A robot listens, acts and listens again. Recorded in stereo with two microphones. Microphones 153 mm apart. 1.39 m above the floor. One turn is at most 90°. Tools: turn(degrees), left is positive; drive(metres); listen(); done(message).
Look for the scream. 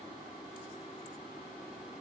listen()
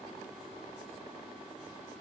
listen()
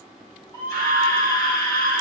turn(degrees=25)
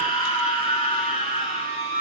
turn(degrees=90)
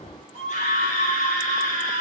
turn(degrees=50)
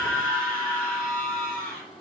done("Facing the scream, over 4 m away.")